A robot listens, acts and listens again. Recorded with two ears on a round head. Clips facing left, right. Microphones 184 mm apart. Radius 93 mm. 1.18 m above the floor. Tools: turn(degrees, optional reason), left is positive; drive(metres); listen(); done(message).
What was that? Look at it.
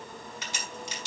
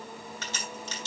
turn(degrees=15, reason="The crack: about 15° left or 165° left.")
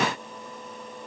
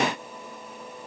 listen()
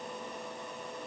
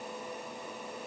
done("I heard a crack, but can't make it out now. It was about straight ahead or 150° left.")